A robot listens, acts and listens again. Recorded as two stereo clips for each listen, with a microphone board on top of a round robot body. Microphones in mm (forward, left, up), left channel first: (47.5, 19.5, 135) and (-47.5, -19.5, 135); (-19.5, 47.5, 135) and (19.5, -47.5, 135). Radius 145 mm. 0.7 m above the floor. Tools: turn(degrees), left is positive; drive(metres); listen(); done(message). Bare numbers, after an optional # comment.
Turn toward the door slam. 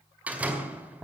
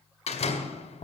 # The door slam: 125° left.
turn(125)
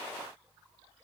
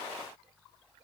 done("I heard a door slam from this way, but can't make it out now.")